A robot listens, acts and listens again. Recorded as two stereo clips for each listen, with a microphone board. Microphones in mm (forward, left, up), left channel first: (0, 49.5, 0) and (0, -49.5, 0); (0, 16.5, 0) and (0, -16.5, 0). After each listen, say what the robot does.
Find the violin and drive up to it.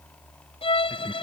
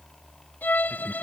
Turn 60° left.
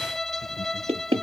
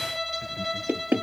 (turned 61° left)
Drive 1.0 m forward.
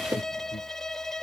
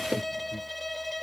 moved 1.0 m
Drive 1.0 m forward.
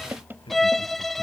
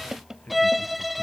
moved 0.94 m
Drive 1.0 m forward.
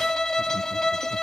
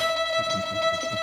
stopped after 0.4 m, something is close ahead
Arrived at the violin, straight ahead.